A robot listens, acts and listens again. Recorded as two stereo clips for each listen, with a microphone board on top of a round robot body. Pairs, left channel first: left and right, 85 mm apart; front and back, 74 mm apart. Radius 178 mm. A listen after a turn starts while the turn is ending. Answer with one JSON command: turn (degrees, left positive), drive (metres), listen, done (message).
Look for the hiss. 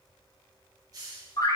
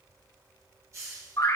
{"turn": -135}
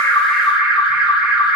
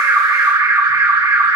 {"listen": true}
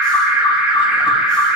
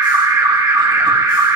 {"listen": true}
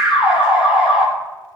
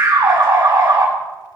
{"done": "I heard a hiss from this way, but can't make it out now."}